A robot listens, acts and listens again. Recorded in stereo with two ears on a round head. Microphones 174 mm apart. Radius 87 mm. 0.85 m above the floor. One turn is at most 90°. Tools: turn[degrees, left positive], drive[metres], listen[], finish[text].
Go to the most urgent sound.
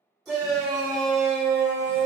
Action: turn[30]
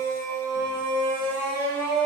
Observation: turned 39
Thought: So it is at 40° right.
Action: turn[-40]
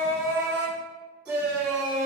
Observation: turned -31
Action: drive[1.0]
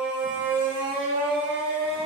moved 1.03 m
Thought: The shout is now 10° right.
Action: turn[-10]
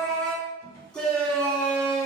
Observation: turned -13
Action: drive[1.0]
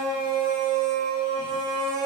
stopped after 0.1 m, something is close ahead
Action: finish[I am next to the shout.]